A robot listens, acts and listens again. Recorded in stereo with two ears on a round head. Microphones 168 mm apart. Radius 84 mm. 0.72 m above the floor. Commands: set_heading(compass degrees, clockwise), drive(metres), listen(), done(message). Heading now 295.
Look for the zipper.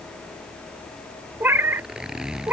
set_heading(325)
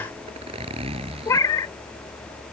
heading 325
set_heading(110)
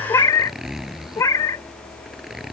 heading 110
done("Found it: a zipper, straight ahead.")